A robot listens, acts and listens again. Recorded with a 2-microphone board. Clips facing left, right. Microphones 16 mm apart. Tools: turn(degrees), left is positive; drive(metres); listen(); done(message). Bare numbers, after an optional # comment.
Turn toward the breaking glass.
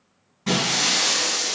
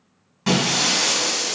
# The breaking glass: about 70° right or 110° right.
turn(-70)
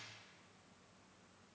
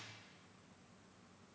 listen()
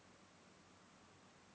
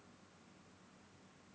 done("I heard breaking glass, but can't make it out now. It was about straight ahead or 40° right.")